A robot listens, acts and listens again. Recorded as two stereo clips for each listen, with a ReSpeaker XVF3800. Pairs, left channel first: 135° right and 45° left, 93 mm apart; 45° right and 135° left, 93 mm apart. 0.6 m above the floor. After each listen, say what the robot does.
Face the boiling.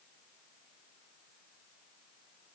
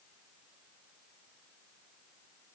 Keep listening.
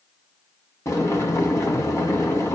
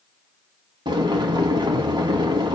Turn 165° left.
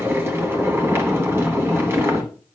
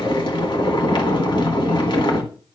Turn 20° right.
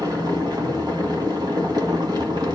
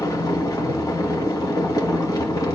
Facing the boiling.